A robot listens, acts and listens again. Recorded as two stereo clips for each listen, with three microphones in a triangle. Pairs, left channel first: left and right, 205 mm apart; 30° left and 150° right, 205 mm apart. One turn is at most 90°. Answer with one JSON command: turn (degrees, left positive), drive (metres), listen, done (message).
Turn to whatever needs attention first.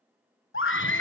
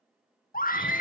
{"turn": 75}
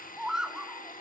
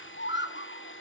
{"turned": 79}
{"done": "Found it: a scream, straight ahead."}